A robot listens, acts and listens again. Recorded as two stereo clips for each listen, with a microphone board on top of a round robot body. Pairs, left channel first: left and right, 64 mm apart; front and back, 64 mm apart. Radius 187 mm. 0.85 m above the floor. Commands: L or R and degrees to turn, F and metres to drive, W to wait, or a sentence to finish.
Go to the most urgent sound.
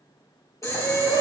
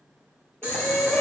L65
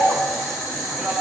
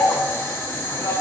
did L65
R10
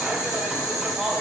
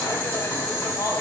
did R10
W
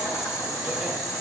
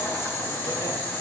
W
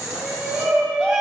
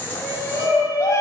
F1.0
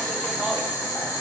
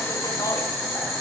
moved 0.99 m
W
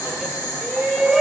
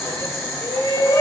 F1.0
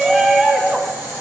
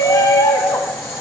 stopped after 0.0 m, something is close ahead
Arrived at the shout, straight ahead.